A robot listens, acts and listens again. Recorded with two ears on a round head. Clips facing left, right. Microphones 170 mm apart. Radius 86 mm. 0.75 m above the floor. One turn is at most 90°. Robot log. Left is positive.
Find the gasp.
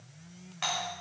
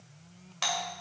cmd idle
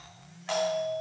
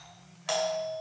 cmd idle
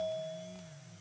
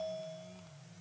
end: I can't make out a gasp, only a doorbell.